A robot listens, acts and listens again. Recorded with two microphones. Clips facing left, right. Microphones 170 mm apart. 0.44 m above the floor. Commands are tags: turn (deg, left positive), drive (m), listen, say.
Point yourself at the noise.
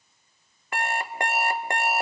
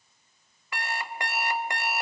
<turn deg="50"/>
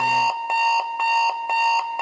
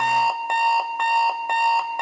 <say>Facing the alarm clock.</say>